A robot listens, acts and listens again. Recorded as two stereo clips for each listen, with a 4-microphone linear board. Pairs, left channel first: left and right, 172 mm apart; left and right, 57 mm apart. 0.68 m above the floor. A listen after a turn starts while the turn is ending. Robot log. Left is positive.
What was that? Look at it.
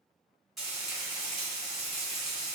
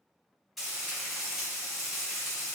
cmd yaw +30
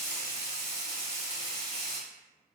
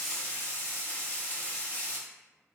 note: So it is at 145° left.
cmd yaw +145
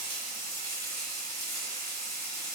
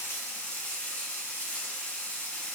note: The frying is now 25° left.
cmd yaw +25
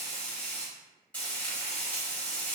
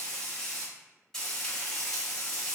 note: The frying is now 10° left.
cmd yaw +10
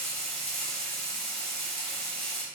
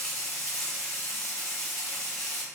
end: Found it: frying, straight ahead, 1 to 2 m away.